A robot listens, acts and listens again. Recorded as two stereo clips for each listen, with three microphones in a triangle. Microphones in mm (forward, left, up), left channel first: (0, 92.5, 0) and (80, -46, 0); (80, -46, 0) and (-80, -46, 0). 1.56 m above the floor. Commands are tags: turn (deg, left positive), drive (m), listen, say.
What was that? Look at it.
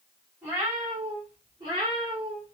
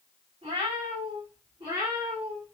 <turn deg="-110"/>
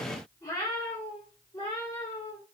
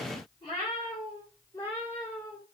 <turn deg="75"/>
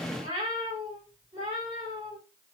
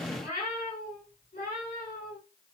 <turn deg="-10"/>
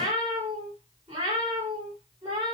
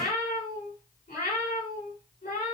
<say>Facing the cat meowing, 2 to 4 m away.</say>